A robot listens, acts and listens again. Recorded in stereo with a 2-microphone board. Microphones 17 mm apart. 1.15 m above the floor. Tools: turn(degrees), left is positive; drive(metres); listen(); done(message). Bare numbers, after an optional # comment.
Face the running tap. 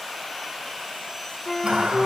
# The running tap: about 70° right or 110° right.
turn(-70)
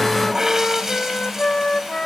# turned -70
# So it is at 35° right.
turn(-35)
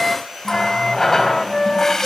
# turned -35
# The running tap is now 20° left.
turn(20)
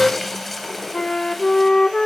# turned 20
done("Found it: a running tap, straight ahead, over 4 m away.")